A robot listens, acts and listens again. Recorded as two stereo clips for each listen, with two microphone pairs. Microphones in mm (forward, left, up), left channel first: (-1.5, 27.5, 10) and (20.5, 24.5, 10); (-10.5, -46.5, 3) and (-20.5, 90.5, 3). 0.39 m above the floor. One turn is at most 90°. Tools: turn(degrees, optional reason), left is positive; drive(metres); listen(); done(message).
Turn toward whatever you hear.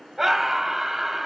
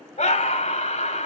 turn(degrees=-75, reason="The scream: 75° right.")
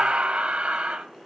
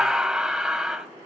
turn(degrees=10, reason="The scream is now 10° left.")
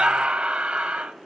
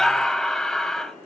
done("Facing the scream.")